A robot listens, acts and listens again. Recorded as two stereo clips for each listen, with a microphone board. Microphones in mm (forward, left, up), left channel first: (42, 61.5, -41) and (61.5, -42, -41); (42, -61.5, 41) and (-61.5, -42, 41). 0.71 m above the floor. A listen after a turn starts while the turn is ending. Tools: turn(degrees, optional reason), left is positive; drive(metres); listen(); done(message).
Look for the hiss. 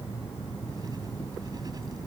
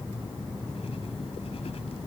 listen()
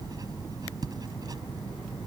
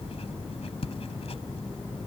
listen()
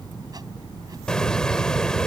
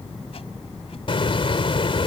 turn(degrees=20, reason="The hiss: 20° left.")
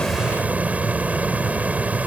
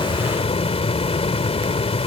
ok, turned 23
done("Found it: a hiss, straight ahead.")